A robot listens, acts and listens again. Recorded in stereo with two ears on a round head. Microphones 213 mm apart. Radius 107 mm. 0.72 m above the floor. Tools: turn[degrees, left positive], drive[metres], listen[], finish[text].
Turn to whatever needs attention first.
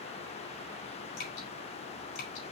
Action: listen[]
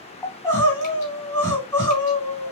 Action: turn[30]
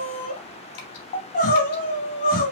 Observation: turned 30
Thought: So it is at 140° left.
Action: turn[140]
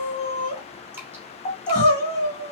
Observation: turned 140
Thought: The crying is now 30° left.
Action: turn[30]
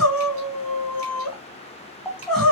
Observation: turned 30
Action: finish[Found it: crying, straight ahead.]